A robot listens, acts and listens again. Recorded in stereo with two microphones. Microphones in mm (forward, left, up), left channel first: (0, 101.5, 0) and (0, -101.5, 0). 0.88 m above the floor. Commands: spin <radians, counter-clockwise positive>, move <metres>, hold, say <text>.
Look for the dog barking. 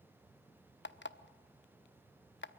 hold
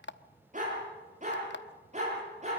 spin -0.61
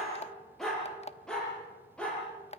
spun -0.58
say Found it: a dog barking, straight ahead, over 4 m away.